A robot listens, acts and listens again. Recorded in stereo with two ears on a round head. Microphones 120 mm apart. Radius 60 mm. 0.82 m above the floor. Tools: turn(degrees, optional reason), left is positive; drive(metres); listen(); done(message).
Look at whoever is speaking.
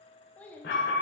turn(degrees=30)
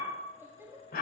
turn(degrees=-20, reason="So it is at 20° right.")
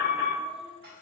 listen()
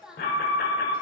done("Found it: a child speaking, straight ahead, 1 to 2 m away.")